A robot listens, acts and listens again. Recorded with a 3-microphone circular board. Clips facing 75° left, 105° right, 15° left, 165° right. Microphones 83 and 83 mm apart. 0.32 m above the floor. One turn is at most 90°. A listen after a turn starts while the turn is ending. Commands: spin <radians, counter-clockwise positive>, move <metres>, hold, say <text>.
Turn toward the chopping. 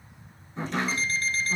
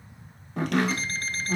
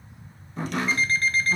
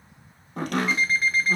spin -1.57
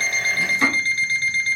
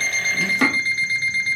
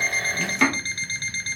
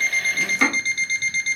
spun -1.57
spin -1.31
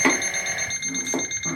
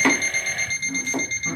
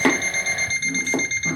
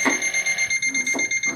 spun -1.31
spin 0.26
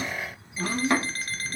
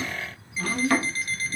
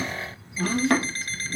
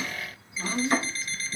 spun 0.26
say Found it: chopping, straight ahead.